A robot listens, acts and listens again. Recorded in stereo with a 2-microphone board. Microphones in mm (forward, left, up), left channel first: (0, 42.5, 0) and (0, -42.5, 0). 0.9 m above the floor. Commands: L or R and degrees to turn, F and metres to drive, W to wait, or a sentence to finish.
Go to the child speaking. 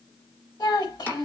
L60
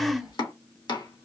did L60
F1.0
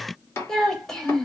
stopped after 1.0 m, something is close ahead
I am next to the child speaking.